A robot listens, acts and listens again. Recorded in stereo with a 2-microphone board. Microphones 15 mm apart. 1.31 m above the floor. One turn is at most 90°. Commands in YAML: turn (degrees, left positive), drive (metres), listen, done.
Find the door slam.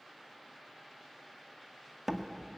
turn: -30
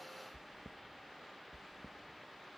listen: true
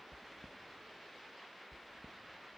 done: "I heard a door slam, but can't make it out now. It was about 15° left or 135° right."